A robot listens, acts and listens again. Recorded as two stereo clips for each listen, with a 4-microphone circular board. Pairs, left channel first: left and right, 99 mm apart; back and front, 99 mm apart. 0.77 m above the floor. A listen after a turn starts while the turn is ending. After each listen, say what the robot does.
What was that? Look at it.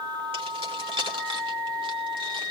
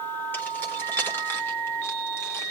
Turn 115° right.
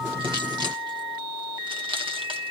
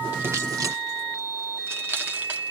Turn 65° right.
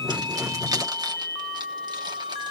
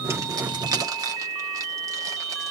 Turn 45° right.
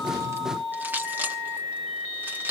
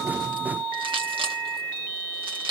Turn 20° right.
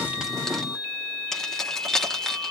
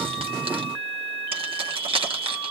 Facing the keys jangling, 1 to 2 m away.